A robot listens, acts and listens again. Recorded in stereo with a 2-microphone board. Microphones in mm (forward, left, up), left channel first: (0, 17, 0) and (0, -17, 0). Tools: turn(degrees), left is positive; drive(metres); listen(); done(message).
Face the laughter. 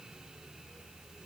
listen()
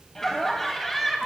turn(degrees=30)
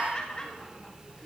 turn(degrees=155)
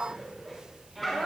done("Facing the laughter.")